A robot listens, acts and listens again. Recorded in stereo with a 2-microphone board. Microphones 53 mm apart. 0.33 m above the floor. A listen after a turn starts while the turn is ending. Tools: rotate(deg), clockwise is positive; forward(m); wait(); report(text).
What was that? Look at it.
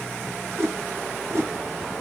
rotate(60)
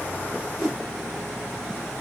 report("Facing the whoosh.")